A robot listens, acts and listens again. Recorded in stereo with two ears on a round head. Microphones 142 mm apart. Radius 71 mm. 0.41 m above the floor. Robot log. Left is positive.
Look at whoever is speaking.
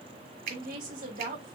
note: The woman speaking: about 55° right or 125° right.
cmd yaw -55
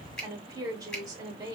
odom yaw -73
note: So it is at 30° right.
cmd yaw -30
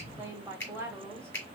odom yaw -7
note: The woman speaking is now 20° right.
cmd yaw -20
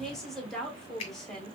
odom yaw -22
end: Facing the woman speaking, 1 to 2 m away.